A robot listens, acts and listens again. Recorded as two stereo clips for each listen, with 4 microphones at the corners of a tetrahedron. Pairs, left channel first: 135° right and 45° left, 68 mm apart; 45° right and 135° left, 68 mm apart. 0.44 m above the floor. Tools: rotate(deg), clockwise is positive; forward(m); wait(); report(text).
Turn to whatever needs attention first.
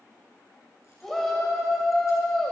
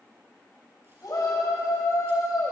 rotate(50)
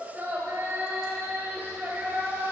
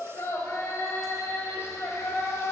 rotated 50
rotate(10)
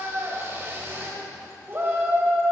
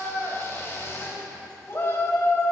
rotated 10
report("Found it: a shout, straight ahead.")